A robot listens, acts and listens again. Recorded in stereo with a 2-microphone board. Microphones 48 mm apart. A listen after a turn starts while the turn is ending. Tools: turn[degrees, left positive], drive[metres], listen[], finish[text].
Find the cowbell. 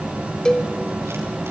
Thought: The cowbell: about 15° left or 165° left.
Action: turn[15]
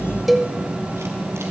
Action: finish[Found it: a cowbell, straight ahead, 1 to 2 m away.]